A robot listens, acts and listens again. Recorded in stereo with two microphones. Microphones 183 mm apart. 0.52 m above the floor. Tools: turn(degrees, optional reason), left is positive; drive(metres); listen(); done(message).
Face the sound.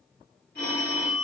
turn(degrees=60, reason="The phone ringing: about 60° left or 120° left.")
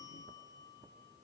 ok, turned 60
listen()
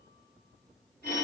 turn(degrees=60, reason="So it is at 60° left.")
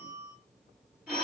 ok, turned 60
done("Facing the phone ringing, 2 to 4 m away.")